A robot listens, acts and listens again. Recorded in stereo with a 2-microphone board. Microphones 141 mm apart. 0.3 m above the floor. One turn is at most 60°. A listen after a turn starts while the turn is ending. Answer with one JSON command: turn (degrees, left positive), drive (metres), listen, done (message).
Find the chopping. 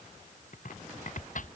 {"turn": 60}
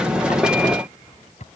{"turn": 55}
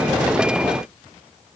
{"listen": true}
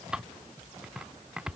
{"done": "Found it: chopping, straight ahead."}